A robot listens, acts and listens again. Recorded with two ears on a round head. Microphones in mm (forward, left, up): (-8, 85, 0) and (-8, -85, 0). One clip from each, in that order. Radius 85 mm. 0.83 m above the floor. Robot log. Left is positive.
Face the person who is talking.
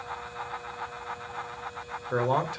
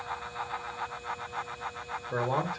note: The man speaking: about 60° left or 120° left.
cmd yaw +60
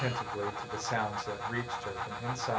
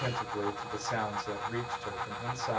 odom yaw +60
end: Facing the man speaking.